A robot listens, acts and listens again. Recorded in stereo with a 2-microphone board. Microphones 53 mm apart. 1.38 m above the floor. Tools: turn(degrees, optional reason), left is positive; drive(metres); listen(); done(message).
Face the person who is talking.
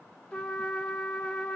listen()
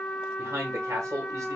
turn(degrees=-75, reason="The man speaking: about 75° right or 105° right.")
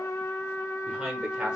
turn(degrees=-15, reason="So it is at 15° right.")
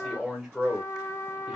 done("Facing the man speaking.")